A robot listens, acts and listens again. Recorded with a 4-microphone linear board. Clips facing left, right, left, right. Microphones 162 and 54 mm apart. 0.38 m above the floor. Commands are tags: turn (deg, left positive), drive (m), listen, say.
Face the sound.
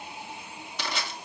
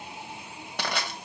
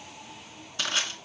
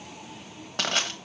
<turn deg="-60"/>
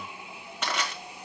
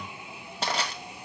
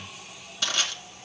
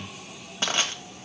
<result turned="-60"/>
<turn deg="-40"/>
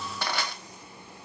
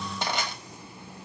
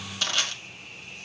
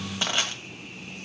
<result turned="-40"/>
<turn deg="-25"/>
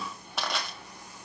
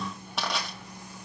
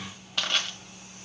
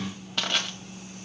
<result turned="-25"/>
<say>Facing the crushing.</say>